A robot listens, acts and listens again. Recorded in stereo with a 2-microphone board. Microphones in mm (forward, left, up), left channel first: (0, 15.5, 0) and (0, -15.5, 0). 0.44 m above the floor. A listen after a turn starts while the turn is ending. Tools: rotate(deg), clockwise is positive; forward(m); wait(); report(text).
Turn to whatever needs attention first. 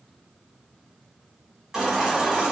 rotate(20)
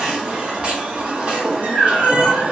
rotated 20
rotate(140)
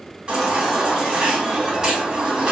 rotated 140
rotate(30)
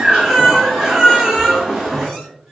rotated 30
report("Found it: a baby crying, straight ahead.")